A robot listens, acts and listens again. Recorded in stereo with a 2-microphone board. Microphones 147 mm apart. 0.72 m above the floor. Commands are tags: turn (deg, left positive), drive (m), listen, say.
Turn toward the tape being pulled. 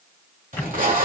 <turn deg="-60"/>
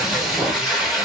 <say>Found it: tape being pulled, straight ahead, 1 to 2 m away.</say>